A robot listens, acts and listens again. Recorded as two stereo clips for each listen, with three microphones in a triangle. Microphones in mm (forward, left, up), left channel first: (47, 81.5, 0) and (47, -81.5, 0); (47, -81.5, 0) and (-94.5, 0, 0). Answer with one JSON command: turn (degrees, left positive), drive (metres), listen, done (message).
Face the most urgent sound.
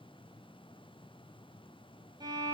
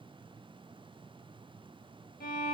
{"listen": true}
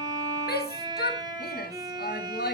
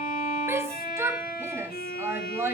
{"turn": 75}
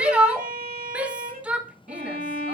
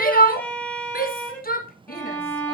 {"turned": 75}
{"done": "Facing the shout, 1 to 2 m away."}